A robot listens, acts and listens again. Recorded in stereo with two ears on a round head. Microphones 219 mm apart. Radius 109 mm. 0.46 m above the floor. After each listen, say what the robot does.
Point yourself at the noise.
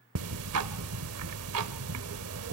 Turn 65° right.
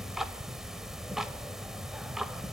Found it: ticking, straight ahead, under 1 m away.